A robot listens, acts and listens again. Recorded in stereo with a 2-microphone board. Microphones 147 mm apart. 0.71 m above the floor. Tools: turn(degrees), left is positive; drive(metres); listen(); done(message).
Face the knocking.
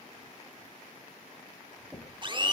turn(degrees=-30)
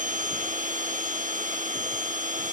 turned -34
listen()
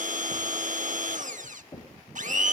turn(degrees=20)
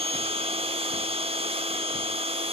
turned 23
listen()
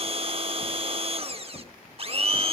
done("Found it: knocking, straight ahead.")